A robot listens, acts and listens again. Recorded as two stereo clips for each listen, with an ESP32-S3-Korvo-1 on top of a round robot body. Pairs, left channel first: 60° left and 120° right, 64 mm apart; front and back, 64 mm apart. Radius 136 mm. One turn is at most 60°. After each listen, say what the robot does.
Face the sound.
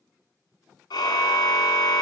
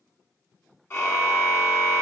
Turn 55° left.
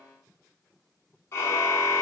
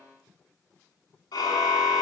Facing the car horn, 2 to 4 m away.